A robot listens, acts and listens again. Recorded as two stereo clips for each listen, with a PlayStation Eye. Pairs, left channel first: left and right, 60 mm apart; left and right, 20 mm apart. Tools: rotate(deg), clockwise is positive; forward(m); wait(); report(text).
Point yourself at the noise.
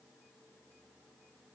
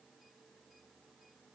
wait()
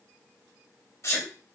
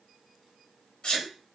rotate(-50)
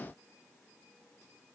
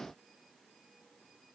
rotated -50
wait()
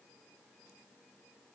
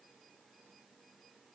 report("I heard a sneeze, but can't make it out now. It was about straight ahead or 80° left.")